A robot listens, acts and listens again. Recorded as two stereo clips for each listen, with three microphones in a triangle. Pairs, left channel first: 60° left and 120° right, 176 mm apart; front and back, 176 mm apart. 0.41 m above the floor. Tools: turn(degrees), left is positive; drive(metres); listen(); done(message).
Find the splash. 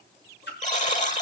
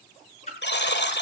turn(degrees=50)
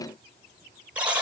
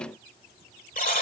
done("I heard a splash from this way, but can't make it out now.")